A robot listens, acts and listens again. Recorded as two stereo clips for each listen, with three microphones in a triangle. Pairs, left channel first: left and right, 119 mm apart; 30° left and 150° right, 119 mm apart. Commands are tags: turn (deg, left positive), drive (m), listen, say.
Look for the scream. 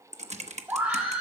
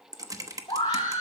<turn deg="-15"/>
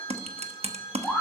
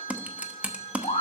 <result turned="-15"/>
<say>Facing the scream.</say>